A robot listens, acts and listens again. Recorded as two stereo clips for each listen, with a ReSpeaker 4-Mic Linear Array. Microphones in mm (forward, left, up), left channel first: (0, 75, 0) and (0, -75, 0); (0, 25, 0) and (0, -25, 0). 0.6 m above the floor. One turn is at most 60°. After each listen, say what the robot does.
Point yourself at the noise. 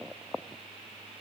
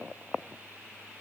Keep listening.
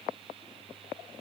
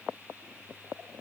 Keep listening.
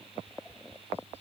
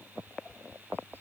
Turn 45° left.
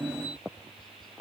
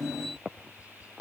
Turn 60° left.
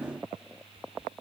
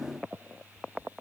Turn 45° left.
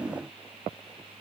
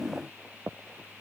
Keep listening.
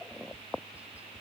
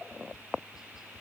Turn 10° right.
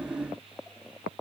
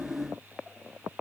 Found it: tapping, straight ahead.